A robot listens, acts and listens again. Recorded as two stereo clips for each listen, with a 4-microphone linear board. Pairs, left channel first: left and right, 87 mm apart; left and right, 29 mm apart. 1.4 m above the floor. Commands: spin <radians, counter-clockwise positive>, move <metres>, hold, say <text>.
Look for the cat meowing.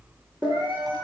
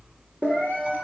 spin 1.31
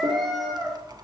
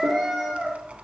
say Facing the cat meowing, 2 to 4 m away.